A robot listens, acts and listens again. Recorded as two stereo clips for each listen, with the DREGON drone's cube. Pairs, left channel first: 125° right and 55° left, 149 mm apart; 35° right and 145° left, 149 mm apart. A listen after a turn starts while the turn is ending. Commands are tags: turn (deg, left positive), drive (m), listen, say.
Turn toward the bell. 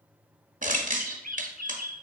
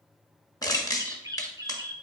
<listen/>
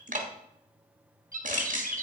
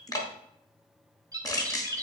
<listen/>
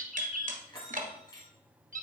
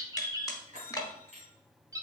<turn deg="180"/>
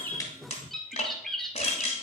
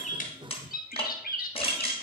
<listen/>
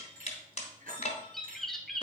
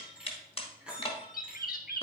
<turn deg="65"/>
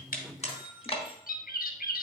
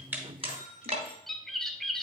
<turn deg="-25"/>
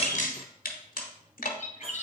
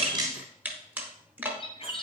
<listen/>
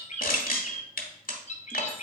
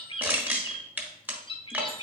<listen/>
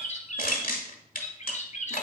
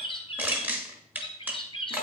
<say>Facing where the bell came from. I can't hear it now.</say>